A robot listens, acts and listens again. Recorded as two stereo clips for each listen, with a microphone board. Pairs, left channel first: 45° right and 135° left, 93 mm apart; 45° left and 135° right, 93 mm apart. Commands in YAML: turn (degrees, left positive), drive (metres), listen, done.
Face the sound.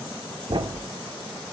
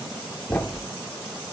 turn: 110
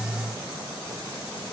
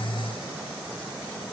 done: "Facing where the thud came from. I can't hear it now."